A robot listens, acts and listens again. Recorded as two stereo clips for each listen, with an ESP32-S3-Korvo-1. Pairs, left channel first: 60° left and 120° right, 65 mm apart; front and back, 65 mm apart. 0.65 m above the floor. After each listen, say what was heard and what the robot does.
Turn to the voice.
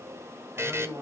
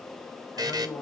The man speaking: 50° right. Turn 50° right.
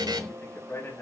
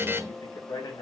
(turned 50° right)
Facing the man speaking.